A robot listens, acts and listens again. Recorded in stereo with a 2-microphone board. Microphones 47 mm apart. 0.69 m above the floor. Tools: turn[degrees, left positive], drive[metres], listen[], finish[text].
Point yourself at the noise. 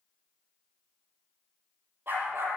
Thought: The dog barking: about 55° right or 125° right.
Action: turn[-55]
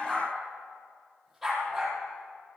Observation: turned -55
Action: finish[Found it: a dog barking, straight ahead, over 4 m away.]